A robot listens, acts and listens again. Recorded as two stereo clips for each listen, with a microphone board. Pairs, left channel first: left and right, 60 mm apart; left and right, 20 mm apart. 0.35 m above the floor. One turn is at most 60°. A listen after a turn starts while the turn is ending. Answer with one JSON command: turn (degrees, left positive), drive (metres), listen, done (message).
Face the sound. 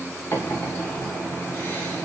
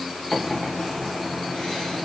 {"turn": 45}
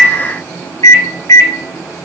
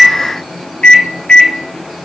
{"turn": 60}
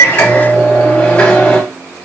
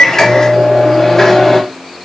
{"turn": 25}
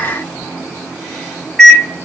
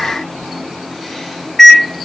{"done": "Found it: a microwave, straight ahead, 1 to 2 m away."}